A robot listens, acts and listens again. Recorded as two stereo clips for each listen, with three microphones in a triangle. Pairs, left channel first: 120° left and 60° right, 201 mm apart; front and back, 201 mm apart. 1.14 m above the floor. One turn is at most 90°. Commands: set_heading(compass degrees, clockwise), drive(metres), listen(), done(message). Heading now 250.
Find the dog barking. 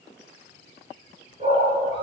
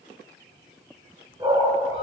set_heading(340)
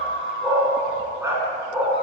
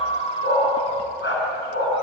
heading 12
set_heading(352)
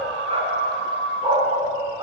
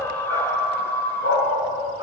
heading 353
set_heading(343)
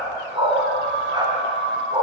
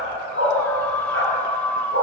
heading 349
set_heading(339)
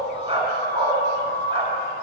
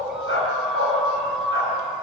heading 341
done("Facing the dog barking.")